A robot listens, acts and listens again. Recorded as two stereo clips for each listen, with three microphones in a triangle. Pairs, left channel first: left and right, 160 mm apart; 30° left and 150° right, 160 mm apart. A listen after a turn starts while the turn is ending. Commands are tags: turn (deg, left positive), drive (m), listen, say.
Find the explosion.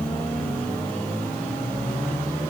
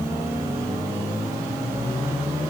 <listen/>
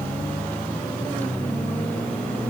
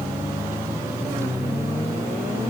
<listen/>
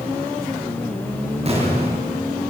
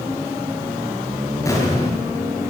<turn deg="-40"/>
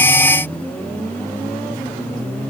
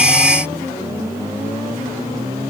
<say>I heard an explosion from this way, but can't make it out now.</say>